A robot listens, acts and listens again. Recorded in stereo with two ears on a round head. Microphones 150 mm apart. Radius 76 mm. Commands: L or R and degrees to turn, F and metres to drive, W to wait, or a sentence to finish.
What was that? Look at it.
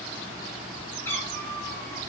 L30
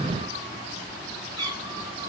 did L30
R25
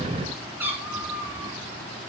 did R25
R10
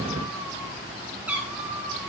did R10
R10
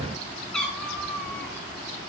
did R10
Facing the cat meowing, 2 to 4 m away.